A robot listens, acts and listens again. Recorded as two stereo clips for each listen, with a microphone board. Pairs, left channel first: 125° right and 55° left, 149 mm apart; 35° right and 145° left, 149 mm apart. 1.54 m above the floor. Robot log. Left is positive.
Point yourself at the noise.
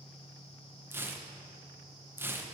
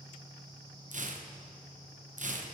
note: The tearing paper: 130° left.
cmd yaw +130
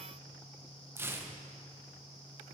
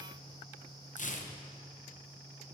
note: The tearing paper is now 15° right.
cmd yaw -15
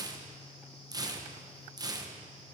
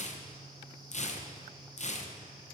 end: Found it: tearing paper, straight ahead, under 1 m away.